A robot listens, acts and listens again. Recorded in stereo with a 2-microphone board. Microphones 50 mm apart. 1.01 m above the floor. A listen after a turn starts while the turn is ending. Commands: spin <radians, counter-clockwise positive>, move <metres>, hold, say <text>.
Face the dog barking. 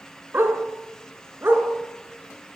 spin -0.79
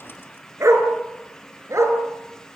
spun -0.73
spin -1.75
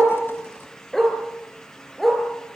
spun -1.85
say Facing the dog barking.